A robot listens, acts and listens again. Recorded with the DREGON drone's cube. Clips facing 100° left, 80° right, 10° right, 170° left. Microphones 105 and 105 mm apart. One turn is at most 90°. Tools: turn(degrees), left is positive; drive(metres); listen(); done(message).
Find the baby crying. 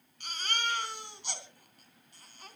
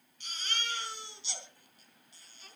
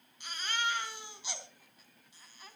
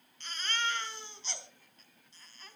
turn(degrees=70)
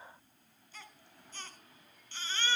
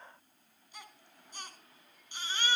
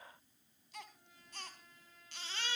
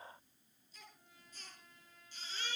done("Facing the baby crying.")